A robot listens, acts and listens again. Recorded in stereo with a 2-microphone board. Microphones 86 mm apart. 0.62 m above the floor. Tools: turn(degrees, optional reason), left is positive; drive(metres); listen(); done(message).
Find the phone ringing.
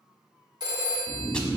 turn(degrees=-55, reason="The phone ringing: about 55° right or 125° right.")
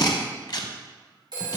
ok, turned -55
turn(degrees=-70, reason="So it is at 70° right.")
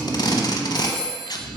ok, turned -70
turn(degrees=-20, reason="The phone ringing is now 20° right.")
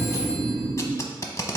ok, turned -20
listen()
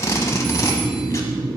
listen()
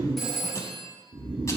done("Found it: a phone ringing, straight ahead, 1 to 2 m away.")